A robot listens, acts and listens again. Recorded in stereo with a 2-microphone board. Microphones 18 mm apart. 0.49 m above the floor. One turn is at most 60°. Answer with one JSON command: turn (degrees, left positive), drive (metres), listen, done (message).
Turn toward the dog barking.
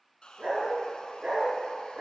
{"turn": -60}
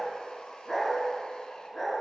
{"turn": 30}
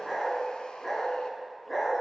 {"turn": 10}
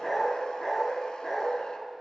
{"done": "Facing the dog barking."}